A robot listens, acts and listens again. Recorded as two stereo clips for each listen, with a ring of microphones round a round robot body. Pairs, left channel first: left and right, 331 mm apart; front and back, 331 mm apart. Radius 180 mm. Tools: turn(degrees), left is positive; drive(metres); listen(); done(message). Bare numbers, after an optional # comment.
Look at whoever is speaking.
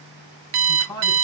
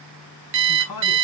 # The man speaking: 10° left.
turn(10)
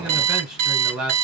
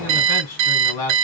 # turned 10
done("Facing the man speaking, 2 to 4 m away.")